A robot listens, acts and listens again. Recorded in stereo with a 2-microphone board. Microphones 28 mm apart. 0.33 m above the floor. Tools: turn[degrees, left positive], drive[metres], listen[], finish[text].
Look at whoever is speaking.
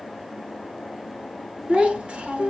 Thought: The child speaking: about 50° right or 130° right.
Action: turn[-50]
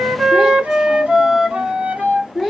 Thought: So it is at 15° right.
Action: turn[-15]
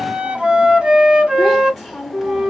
Action: finish[Found it: a child speaking, straight ahead.]